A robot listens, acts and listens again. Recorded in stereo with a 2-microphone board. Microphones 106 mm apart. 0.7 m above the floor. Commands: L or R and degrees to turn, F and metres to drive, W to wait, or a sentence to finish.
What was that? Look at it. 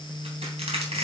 R90
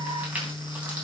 R15
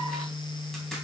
W
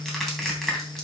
Facing the crushing.